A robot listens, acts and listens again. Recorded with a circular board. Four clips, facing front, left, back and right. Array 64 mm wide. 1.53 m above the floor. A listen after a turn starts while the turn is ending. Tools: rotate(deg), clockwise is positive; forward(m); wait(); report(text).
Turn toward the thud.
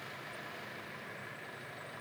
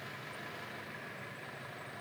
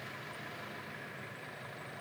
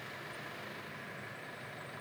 wait()
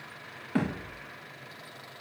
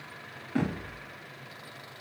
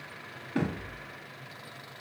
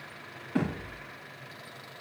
report("Facing the thud.")